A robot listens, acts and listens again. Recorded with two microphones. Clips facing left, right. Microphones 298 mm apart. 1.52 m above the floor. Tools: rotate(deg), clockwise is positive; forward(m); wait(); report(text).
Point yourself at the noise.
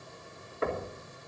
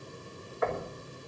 rotate(-30)
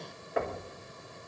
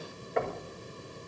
report("Found it: knocking, straight ahead.")